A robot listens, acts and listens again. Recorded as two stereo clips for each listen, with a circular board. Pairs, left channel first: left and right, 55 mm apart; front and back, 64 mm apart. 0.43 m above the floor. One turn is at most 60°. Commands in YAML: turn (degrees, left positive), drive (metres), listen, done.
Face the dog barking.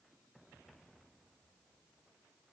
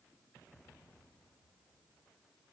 listen: true
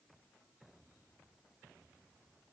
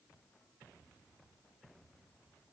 listen: true
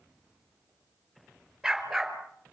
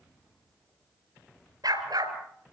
turn: -60
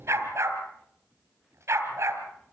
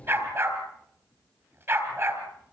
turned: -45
turn: -60
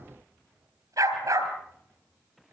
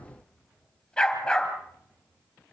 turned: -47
turn: -60
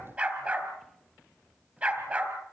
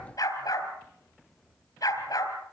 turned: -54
turn: -25
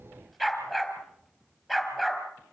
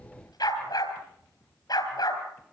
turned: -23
done: "Found it: a dog barking, straight ahead, over 4 m away."